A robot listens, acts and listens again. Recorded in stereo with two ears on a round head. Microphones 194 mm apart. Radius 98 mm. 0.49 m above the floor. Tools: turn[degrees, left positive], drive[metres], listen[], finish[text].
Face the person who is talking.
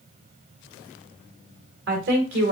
Thought: The woman speaking: about 55° right or 125° right.
Action: turn[-55]
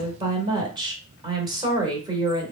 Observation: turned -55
Thought: So it is at 25° right.
Action: turn[-25]
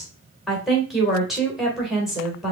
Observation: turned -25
Action: finish[Found it: a woman speaking, straight ahead.]